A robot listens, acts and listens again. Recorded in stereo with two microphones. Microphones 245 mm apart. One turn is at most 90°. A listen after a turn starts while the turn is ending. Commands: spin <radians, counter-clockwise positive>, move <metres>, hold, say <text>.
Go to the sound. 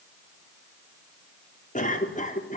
spin 0.52
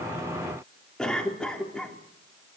move 1.0
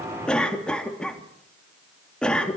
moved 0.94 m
move 1.0
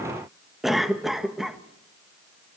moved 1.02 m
move 1.0
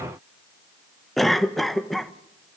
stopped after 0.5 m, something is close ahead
say I am next to the cough.